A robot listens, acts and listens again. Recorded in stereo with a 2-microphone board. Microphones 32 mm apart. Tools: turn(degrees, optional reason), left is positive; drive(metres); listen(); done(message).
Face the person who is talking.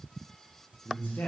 turn(degrees=70, reason="The man speaking: about 70° left or 110° left.")
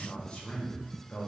turn(degrees=35, reason="So it is at 35° left.")
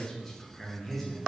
turn(degrees=10, reason="The man speaking is now 10° left.")
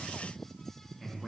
done("Found it: a man speaking, straight ahead, 1 to 2 m away.")